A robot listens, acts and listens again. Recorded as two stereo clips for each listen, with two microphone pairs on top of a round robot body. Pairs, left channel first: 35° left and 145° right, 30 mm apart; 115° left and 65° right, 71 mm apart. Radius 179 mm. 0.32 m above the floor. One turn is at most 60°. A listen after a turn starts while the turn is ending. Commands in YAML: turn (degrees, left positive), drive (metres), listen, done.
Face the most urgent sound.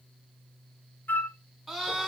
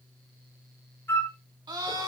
turn: -55
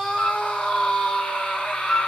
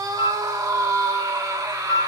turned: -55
turn: -10
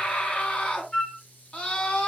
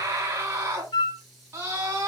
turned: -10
done: "Found it: a scream, straight ahead, over 4 m away."